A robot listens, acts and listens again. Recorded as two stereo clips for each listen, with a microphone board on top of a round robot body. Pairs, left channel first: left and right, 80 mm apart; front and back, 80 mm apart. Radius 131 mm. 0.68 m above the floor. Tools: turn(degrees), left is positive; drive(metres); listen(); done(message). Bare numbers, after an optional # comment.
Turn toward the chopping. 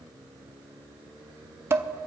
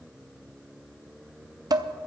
listen()
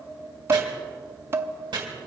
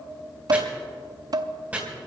# The chopping: 110° right.
turn(-110)
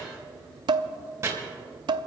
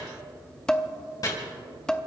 # The chopping is now 40° right.
turn(-40)
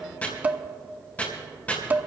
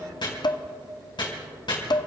# The chopping is now 20° left.
turn(20)
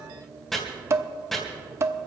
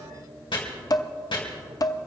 done("Facing the chopping.")